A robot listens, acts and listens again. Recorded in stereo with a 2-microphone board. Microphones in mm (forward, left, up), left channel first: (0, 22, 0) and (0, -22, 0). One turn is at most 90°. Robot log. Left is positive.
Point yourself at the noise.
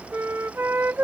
note: The flute: about 65° right or 115° right.
cmd yaw -65
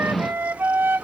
note: So it is at 55° right.
cmd yaw -55
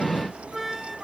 end: Found it: a flute, straight ahead.